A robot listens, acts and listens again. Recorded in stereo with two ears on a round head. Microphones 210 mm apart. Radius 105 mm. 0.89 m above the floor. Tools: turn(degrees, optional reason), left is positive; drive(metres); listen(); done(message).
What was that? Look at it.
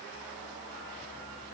listen()
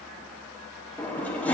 turn(degrees=30)
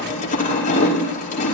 turn(degrees=145, reason="So it is at 145° left.")
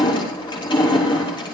turn(degrees=20, reason="The crushing is now 20° left.")
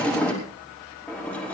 done("Found it: crushing, straight ahead, over 4 m away.")